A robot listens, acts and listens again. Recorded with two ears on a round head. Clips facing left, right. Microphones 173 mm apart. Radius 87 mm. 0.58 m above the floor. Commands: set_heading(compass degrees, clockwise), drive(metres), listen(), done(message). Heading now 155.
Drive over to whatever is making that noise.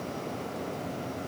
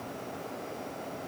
listen()
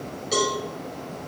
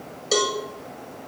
set_heading(215)
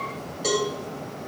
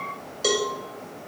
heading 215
set_heading(275)
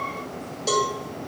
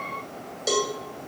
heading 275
set_heading(290)
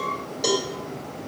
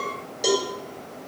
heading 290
drive(1.0)
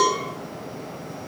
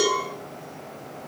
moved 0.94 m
set_heading(305)
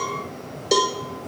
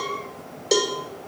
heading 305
drive(1.0)
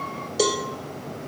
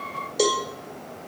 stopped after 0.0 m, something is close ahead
done("Arrived at the cowbell, straight ahead.")